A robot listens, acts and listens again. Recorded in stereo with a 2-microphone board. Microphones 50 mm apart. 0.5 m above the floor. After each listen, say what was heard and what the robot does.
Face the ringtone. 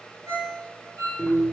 Turn 90° right.
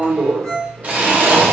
Facing the ringtone.